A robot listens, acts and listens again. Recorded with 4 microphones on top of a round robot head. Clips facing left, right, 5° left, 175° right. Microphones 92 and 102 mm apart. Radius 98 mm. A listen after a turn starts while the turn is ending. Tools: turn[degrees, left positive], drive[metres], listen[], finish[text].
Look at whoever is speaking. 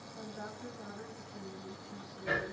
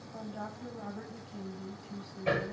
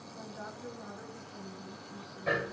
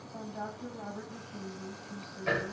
Thought: The woman speaking: 120° right.
Action: turn[-120]
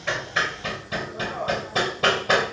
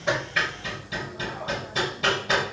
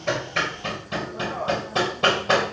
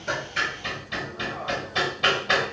Action: listen[]
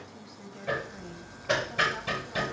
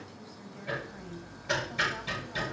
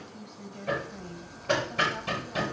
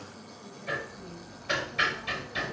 Thought: The woman speaking is now 15° left.
Action: turn[15]
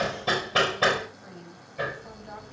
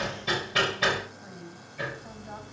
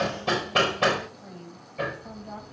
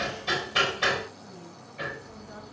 Action: finish[Facing the woman speaking, over 4 m away.]